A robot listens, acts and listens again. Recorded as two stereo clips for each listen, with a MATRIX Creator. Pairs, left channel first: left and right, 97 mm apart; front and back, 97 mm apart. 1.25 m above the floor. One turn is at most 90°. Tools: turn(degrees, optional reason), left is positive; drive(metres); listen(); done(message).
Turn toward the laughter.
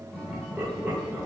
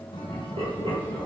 turn(degrees=-90, reason="The laughter: 165° right.")
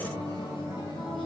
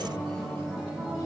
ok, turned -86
turn(degrees=-80, reason="Nothing new. It was at 80° right.")
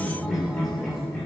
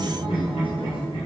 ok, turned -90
turn(degrees=15, reason="The laughter is now 15° left.")
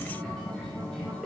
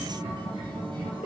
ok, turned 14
done("Facing the laughter.")